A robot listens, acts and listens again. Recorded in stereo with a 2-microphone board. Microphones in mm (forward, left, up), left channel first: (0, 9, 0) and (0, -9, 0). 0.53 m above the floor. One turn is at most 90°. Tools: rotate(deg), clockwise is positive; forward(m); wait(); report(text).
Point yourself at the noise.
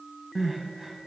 rotate(30)
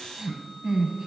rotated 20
rotate(90)
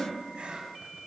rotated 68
rotate(75)
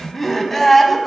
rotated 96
rotate(-20)
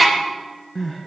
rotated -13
report("Found it: crying, straight ahead.")